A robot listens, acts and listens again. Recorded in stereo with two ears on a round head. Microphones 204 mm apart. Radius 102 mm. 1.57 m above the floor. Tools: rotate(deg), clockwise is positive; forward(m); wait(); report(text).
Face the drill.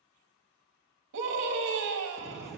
rotate(-30)
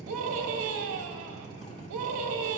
rotate(15)
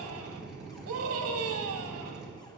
report("Found it: a drill, straight ahead.")